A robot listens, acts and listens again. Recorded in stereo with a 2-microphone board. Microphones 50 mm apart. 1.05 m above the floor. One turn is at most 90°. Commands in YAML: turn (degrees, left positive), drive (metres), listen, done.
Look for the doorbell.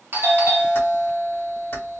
turn: -50
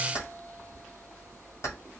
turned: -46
listen: true
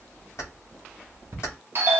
turn: -75
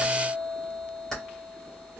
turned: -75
done: "Facing the doorbell."